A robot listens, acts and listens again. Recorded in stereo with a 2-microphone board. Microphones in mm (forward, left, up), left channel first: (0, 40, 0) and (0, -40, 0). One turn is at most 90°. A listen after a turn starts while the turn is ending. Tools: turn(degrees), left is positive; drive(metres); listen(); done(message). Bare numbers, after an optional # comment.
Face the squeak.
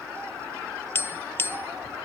listen()
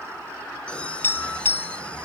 turn(30)
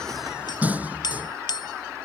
# So it is at 20° right.
turn(-20)
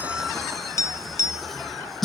done("Facing the squeak.")